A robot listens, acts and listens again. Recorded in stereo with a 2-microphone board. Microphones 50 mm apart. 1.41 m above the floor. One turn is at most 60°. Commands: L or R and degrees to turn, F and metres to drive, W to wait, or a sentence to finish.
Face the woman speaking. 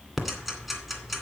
W
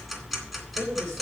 R60
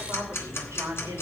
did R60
R60
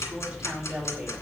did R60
R10
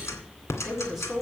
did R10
Facing the woman speaking.